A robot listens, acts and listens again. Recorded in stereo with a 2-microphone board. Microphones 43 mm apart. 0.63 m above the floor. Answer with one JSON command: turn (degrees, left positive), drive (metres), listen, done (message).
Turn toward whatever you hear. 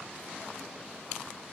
{"listen": true}
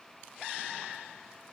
{"listen": true}
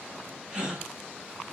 {"turn": -20}
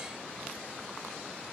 {"listen": true}
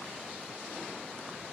{"done": "I heard a gasp, but can't make it out now. It was about straight ahead or 140° right."}